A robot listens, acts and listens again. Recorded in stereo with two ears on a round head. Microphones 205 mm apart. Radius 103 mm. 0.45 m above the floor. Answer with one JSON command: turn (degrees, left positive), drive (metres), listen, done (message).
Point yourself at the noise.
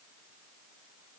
{"listen": true}
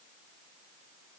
{"listen": true}
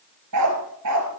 {"turn": -90}
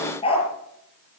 {"turn": 25}
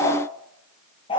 {"turn": 20}
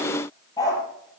{"turn": 15}
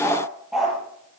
{"done": "Found it: a dog barking, straight ahead."}